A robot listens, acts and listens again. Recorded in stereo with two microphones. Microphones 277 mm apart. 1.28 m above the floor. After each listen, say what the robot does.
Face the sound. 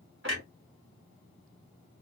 Turn 50° right.
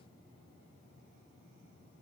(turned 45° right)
Keep listening.
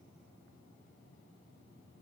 I heard a clunk, but can't make it out now. It was about 5° right or 85° right.